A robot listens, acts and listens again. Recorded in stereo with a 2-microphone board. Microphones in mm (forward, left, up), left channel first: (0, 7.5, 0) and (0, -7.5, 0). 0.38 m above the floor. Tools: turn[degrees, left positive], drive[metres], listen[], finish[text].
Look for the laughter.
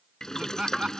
Thought: The laughter: about 50° right or 130° right.
Action: turn[-50]
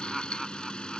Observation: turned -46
Action: finish[Found it: laughter, straight ahead.]